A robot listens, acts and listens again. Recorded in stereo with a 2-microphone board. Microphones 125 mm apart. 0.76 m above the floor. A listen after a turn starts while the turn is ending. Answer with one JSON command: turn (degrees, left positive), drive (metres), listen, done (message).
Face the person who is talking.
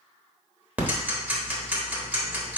{"listen": true}
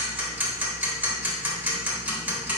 {"listen": true}
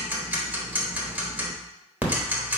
{"done": "I can't make out anyone speaking, only ticking."}